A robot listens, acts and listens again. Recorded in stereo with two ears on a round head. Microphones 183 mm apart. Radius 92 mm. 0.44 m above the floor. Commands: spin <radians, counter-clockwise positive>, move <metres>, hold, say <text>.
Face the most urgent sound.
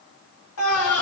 spin 1.57
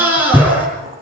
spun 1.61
spin -0.17
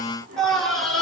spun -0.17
say Found it: a scream, straight ahead, over 4 m away.